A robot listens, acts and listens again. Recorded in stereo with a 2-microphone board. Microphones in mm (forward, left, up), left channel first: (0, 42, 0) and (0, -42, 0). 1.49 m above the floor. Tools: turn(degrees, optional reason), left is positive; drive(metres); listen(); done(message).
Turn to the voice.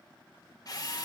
listen()
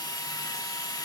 listen()
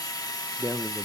turn(degrees=-30, reason="The man speaking: about 30° right or 150° right.")
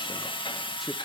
listen()
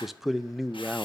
done("Found it: a man speaking, straight ahead, under 1 m away.")